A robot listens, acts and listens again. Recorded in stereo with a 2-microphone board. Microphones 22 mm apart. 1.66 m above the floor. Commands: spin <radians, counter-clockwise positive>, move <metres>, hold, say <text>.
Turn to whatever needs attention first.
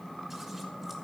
hold
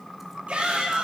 spin -1.57
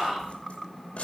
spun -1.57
say Found it: a shout, straight ahead.